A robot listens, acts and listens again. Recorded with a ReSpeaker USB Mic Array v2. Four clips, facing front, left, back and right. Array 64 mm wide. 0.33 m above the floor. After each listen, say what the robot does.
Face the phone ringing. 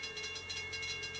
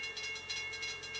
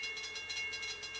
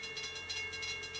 Keep listening.
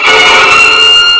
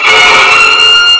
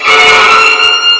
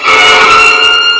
Keep listening.
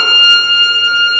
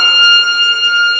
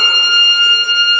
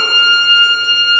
I can't make out a phone ringing to turn to.